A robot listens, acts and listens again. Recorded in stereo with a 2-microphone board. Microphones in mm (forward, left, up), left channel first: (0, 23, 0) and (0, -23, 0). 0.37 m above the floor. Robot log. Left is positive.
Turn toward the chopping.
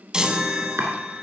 note: The chopping: about 60° right or 120° right.
cmd yaw -60
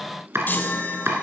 note: So it is at 60° right.
cmd yaw -60
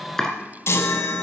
note: The chopping is now 10° left.
cmd yaw +10
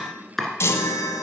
end: Facing the chopping, 2 to 4 m away.